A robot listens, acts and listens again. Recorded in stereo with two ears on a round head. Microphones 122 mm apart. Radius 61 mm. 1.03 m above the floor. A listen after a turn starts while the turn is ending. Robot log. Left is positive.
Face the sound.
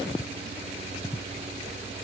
cmd idle
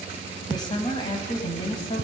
note: The woman speaking: about 35° left or 145° left.
cmd yaw +35
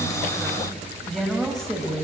end: Found it: a woman speaking, straight ahead, over 4 m away.